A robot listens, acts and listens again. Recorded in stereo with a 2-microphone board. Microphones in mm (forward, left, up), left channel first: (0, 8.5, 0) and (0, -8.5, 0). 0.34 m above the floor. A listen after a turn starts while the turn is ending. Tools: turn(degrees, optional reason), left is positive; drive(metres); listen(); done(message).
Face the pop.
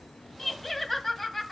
listen()
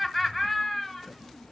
listen()
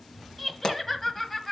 turn(degrees=60, reason="The pop: about 60° left or 120° left.")
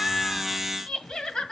listen()
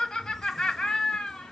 done("I heard a pop, but can't make it out now. It was about straight ahead or 60° left.")